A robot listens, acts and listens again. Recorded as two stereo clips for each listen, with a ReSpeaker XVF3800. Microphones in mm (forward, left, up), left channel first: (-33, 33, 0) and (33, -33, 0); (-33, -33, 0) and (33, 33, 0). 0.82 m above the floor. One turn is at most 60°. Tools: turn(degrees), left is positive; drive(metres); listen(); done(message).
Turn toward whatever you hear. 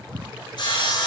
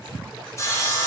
turn(degrees=60)
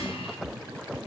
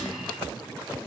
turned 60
turn(degrees=60)
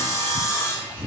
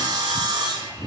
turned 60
turn(degrees=60)
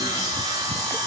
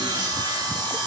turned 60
done("Facing the sawing, 1 to 2 m away.")